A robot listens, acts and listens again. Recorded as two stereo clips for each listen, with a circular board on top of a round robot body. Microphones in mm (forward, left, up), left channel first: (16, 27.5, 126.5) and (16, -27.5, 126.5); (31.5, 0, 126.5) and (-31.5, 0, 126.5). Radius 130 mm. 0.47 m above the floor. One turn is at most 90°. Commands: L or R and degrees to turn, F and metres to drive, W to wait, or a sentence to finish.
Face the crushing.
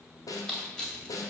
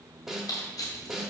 L15
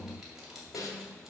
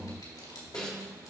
W
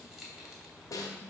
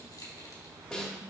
W
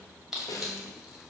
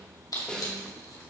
Facing the crushing, 2 to 4 m away.